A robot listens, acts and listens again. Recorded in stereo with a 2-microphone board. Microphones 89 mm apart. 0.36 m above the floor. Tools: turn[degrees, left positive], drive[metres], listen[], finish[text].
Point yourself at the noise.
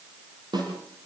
Thought: The snare drum: about 55° right or 125° right.
Action: turn[-55]
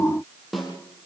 Action: finish[Found it: a snare drum, straight ahead, over 4 m away.]